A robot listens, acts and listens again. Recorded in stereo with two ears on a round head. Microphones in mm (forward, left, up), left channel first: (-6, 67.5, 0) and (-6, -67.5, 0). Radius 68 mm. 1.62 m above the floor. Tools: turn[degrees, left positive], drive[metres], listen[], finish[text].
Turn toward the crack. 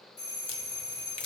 Thought: The crack: about 40° left or 140° left.
Action: turn[40]
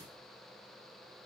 Action: listen[]
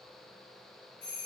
Action: finish[I heard a crack, but can't make it out now. It was about straight ahead or 100° left.]